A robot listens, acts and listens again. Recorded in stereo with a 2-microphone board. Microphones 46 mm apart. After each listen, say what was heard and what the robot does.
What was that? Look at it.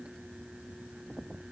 Keep listening.
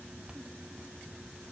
Keep listening.
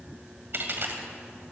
The dropped coin: about 50° right or 130° right. Turn 50° right.
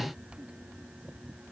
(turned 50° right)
Keep listening.
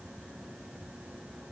I heard a dropped coin, but can't make it out now. It was about straight ahead or 80° right.